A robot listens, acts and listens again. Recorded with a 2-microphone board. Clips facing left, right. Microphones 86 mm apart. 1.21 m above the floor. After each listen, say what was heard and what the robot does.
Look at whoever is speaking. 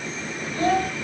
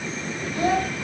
Turn 30° right.
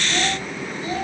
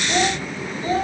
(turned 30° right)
So it is at 150° right. Turn 150° right.
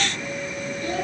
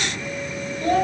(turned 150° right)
The child speaking is now 50° right. Turn 50° right.
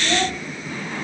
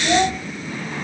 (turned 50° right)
The child speaking is now 20° right. Turn 20° right.
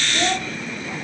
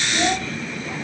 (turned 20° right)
Found it: a child speaking, straight ahead, 2 to 4 m away.